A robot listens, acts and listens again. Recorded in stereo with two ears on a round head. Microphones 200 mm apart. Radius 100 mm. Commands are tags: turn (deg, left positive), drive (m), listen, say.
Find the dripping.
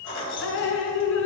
<turn deg="60"/>
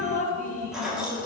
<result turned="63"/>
<turn deg="40"/>
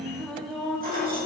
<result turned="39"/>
<say>Found it: dripping, straight ahead, under 1 m away.</say>